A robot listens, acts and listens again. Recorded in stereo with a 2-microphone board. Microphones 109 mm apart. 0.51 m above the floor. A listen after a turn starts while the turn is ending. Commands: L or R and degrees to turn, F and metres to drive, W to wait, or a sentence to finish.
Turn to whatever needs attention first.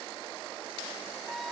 W
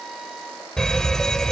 L30
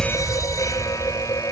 L140
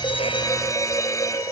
L35
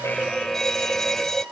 Found it: a fire alarm, straight ahead.